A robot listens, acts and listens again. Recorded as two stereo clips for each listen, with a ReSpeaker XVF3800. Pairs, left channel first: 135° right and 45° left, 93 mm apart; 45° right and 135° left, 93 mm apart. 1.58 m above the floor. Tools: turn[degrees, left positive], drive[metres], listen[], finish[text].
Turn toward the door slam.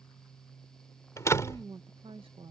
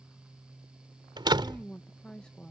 Thought: The door slam: 170° left.
Action: turn[170]
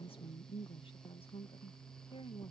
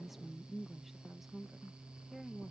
Action: finish[I heard a door slam from this way, but can't make it out now.]